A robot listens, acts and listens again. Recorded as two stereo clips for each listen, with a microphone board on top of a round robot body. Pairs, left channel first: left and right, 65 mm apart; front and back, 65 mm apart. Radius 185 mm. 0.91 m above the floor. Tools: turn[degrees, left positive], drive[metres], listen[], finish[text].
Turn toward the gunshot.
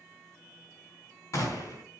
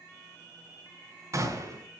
Thought: The gunshot: 135° left.
Action: turn[135]
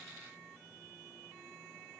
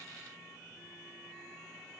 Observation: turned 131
Action: finish[I heard a gunshot from this way, but can't make it out now.]